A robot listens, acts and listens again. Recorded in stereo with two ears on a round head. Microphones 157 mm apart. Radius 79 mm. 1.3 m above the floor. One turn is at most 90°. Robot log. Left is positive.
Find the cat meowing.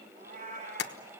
note: The cat meowing: about 50° right or 130° right.
cmd yaw -50
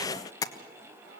note: So it is at 70° right.
cmd yaw -70
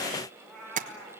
end: Found it: a cat meowing, straight ahead.